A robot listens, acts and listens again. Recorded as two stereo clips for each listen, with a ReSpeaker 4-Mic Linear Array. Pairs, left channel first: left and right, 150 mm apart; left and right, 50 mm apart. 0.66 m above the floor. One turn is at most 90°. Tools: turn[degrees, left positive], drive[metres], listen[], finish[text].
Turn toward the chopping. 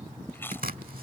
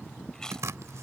Thought: The chopping: about 70° right or 110° right.
Action: turn[-70]
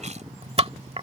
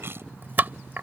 Thought: So it is at 40° right.
Action: turn[-40]
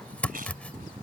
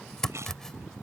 Thought: The chopping is now 10° left.
Action: turn[10]
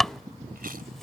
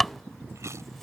Action: finish[Found it: chopping, straight ahead.]